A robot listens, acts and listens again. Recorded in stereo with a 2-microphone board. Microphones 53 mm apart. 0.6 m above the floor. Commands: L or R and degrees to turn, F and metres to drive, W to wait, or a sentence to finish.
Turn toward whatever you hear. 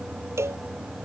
R55
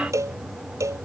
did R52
R70
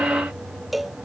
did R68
Found it: a cowbell, straight ahead.